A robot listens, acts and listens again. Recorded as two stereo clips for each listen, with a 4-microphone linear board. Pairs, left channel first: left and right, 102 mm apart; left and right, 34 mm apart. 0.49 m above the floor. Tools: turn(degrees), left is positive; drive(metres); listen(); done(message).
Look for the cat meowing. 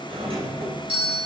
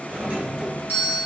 listen()
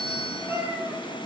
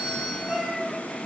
turn(degrees=-20)
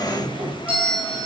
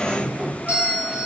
listen()
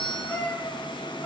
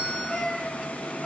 turn(degrees=15)
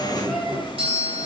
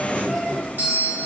listen()
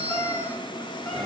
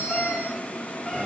listen()
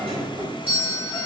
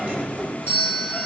done("I heard a cat meowing from this way, but can't make it out now.")